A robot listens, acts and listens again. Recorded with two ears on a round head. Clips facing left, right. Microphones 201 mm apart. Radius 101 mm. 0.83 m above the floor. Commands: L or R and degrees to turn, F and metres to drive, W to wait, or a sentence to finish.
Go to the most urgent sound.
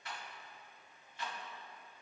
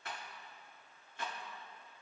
W
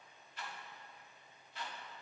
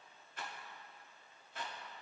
W
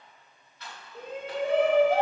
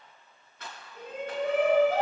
L25
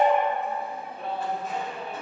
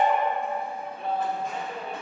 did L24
F1.0
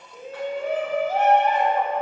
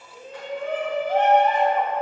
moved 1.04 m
L10
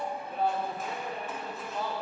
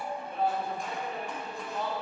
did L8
F1.0
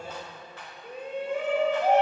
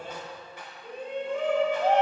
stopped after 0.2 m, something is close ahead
L10
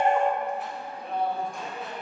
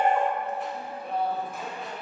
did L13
Arrived at the shout, straight ahead.